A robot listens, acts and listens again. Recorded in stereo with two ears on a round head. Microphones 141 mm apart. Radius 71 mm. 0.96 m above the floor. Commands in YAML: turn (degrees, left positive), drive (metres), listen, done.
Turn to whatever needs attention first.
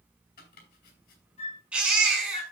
turn: -30
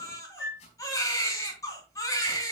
turn: 20
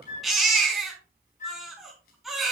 done: "Facing the baby crying, over 4 m away."